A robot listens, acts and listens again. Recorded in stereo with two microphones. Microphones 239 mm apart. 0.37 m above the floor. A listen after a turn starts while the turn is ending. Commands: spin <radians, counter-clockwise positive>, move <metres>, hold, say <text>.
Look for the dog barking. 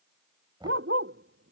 spin -1.05
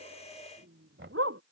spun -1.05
spin -1.13
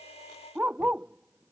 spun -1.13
say Facing the dog barking.